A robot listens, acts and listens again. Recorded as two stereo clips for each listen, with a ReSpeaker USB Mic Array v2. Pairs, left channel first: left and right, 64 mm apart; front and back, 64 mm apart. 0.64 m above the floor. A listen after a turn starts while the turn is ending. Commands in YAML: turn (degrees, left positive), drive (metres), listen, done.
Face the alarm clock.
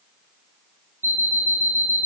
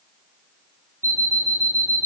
turn: 135
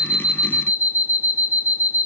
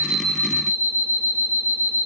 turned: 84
turn: 55
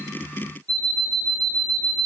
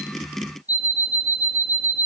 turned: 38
turn: 15
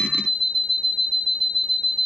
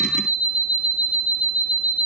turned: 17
done: "Found it: an alarm clock, straight ahead."